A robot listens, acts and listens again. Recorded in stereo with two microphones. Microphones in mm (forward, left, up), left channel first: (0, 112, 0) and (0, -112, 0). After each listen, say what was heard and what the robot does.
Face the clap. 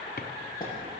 The clap: about 15° left or 165° left. Turn 15° left.
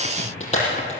So it is at 150° left. Turn 150° left.
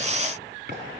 Keep listening.
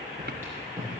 The clap is now 10° right. Turn 10° right.
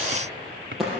Facing the clap, over 4 m away.